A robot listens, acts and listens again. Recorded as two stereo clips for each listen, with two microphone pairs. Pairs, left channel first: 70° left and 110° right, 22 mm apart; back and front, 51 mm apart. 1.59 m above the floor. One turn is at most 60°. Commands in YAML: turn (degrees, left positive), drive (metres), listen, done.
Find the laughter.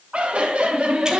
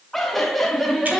turn: -60
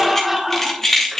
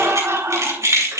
turn: -30
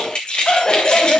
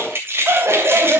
turn: 20
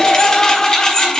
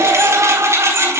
turn: 10
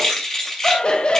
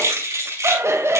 turn: 30
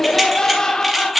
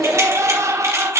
turn: 10
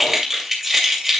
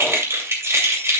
listen: true
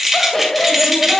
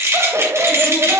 done: "Found it: laughter, straight ahead, 1 to 2 m away."